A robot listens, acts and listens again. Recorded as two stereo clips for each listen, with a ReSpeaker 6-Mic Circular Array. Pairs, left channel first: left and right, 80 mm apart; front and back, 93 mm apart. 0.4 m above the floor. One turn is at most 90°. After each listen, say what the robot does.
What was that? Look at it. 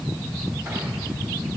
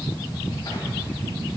Keep listening.
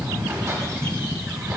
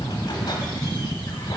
Keep listening.
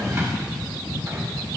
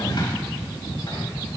I can't make out anything.